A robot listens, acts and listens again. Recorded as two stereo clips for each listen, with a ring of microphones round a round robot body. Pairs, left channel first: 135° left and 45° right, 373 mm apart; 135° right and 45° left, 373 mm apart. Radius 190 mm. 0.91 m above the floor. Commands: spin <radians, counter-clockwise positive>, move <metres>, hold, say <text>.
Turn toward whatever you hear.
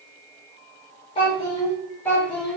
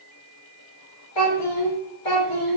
spin -2.36
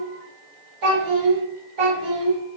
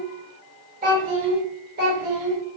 spin -0.26
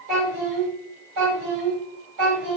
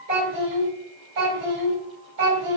say Facing the child speaking, 2 to 4 m away.